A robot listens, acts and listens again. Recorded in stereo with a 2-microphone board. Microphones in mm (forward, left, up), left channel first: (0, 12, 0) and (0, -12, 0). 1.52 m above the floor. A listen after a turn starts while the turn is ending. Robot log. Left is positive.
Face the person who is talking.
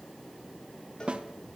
cmd idle
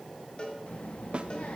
note: The child speaking: about 75° left or 105° left.
cmd yaw +75
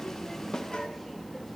note: So it is at 15° left.
cmd yaw +15
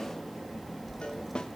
end: Facing the child speaking, 1 to 2 m away.